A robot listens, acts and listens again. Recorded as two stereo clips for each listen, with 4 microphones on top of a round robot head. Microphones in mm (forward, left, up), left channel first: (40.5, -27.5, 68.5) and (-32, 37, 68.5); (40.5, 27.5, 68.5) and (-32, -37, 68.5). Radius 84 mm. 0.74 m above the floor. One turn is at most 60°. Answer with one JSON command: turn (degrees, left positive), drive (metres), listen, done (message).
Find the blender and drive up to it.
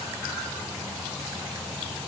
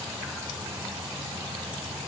{"listen": true}
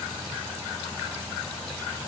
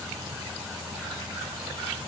{"listen": true}
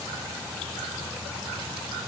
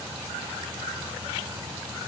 {"done": "I can't make out a blender to turn to."}